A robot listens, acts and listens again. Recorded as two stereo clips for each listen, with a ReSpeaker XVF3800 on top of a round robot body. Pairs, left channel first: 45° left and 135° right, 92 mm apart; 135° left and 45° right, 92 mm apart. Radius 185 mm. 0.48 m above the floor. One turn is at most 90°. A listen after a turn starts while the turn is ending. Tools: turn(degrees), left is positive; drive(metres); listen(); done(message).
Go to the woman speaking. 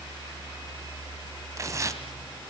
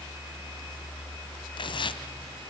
listen()
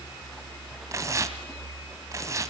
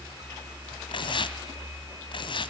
listen()
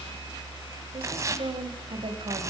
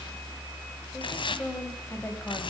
turn(degrees=-90)
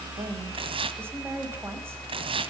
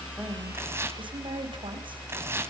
turn(degrees=-70)
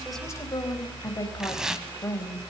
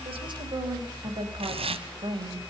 turn(degrees=-10)
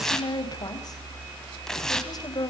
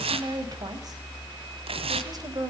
drive(metres=1.0)
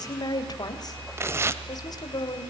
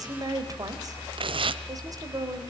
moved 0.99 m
drive(metres=1.0)
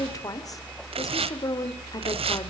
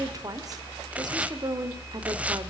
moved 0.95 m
drive(metres=1.0)
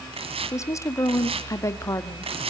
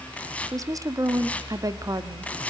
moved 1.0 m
drive(metres=1.0)
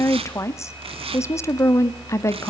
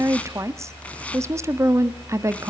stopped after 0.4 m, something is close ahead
done("Arrived at the woman speaking, straight ahead.")